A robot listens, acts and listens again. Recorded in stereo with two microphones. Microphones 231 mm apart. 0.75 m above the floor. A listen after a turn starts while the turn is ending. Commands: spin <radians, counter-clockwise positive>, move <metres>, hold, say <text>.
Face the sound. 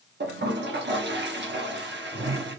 spin -0.96
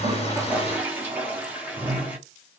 spin -0.17
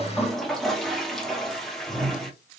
say Facing the toilet flushing, 1 to 2 m away.